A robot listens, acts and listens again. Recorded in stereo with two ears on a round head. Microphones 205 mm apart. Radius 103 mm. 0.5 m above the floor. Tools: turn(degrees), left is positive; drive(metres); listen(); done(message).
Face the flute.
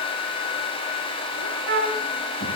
turn(degrees=-50)
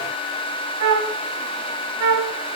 turn(degrees=-80)
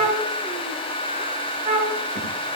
turn(degrees=-25)
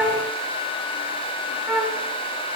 done("Facing the flute, 1 to 2 m away.")